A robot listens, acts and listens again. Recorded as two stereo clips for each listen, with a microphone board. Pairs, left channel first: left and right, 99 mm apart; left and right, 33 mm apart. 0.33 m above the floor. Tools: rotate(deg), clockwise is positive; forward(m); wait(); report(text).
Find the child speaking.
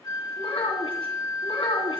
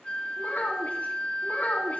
rotate(-70)
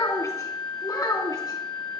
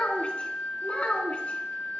rotate(-40)
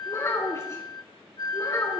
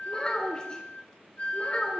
rotate(-35)
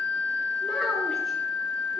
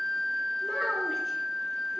wait()
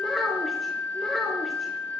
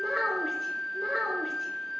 report("Facing the child speaking, 2 to 4 m away.")